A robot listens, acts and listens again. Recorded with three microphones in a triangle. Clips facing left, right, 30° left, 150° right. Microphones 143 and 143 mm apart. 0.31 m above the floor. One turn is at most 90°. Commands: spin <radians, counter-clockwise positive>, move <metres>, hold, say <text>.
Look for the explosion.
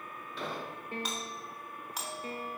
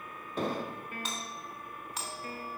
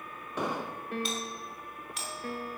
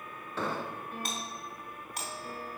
spin -0.79
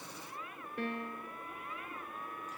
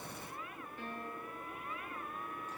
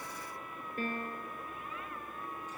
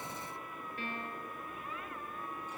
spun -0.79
say Facing where the explosion came from. I can't hear it now.